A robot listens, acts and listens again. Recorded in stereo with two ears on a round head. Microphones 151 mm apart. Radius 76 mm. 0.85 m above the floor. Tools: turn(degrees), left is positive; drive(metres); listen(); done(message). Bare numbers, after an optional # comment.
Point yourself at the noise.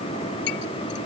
turn(90)
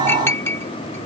# So it is at 15° left.
turn(15)
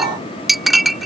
done("Facing the clink.")